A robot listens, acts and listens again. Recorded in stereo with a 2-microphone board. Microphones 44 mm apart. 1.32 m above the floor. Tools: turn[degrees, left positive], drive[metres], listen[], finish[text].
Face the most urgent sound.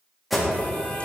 Action: turn[30]
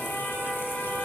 Thought: So it is at 150° left.
Action: turn[150]
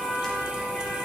Thought: The alarm is now 15° left.
Action: turn[15]
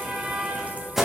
Action: finish[Facing the alarm.]